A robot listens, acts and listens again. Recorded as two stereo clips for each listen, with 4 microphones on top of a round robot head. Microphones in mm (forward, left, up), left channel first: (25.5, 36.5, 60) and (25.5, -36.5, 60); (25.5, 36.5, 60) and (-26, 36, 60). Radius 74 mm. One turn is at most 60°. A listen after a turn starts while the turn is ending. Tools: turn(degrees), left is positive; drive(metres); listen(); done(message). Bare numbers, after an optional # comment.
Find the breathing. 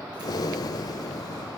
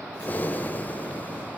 # The breathing: 55° left.
turn(55)
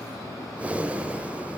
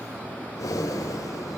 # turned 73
# The breathing is now 20° right.
turn(-20)
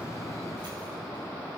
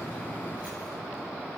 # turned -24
listen()
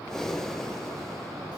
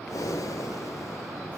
done("Found it: breathing, straight ahead.")